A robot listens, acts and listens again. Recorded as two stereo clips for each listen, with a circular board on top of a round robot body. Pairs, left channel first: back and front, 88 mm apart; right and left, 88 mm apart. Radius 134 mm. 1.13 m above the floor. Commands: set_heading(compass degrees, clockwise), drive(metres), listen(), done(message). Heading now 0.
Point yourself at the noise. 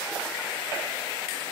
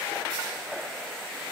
listen()
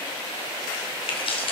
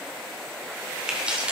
set_heading(195)
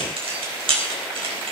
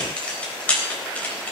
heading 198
set_heading(213)
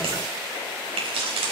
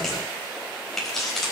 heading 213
done("Found it: keys jangling, straight ahead, over 4 m away.")